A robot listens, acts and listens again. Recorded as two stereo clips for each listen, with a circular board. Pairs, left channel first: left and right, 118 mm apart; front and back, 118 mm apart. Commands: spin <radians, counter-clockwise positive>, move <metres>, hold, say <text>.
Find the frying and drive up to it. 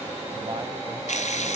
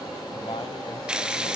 spin 1.66
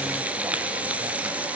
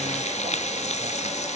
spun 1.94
spin -0.26
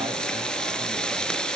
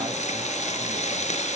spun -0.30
move 1.0
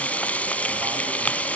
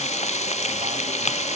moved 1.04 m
spin 0.17
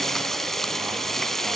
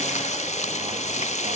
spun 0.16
move 1.0
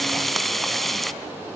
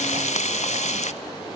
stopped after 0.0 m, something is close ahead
say Arrived at the frying, straight ahead.